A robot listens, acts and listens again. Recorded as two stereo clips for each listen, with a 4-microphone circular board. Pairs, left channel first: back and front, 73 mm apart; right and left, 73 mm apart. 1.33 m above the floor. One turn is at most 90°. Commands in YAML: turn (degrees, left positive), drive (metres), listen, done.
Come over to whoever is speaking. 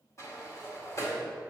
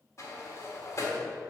listen: true
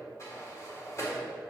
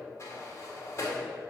listen: true
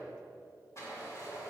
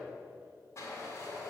done: "I can't make out anyone speaking, only a sliding door."